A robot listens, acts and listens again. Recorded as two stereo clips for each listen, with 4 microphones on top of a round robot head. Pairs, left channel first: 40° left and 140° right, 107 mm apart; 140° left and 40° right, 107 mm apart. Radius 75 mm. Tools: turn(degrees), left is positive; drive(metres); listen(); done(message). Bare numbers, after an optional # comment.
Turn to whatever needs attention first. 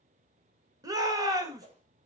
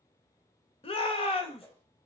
# The shout: 165° left.
turn(165)
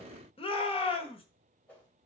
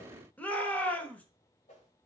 # The shout is now 65° left.
turn(65)
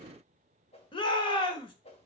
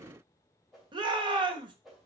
done("Found it: a shout, straight ahead, 1 to 2 m away.")